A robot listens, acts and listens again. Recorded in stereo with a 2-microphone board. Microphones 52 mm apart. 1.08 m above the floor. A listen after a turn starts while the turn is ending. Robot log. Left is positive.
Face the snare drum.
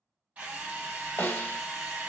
note: The snare drum: about 40° left or 140° left.
cmd yaw +40
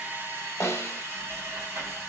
note: So it is at 90° left.
cmd yaw +90
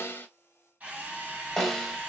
end: Facing the snare drum.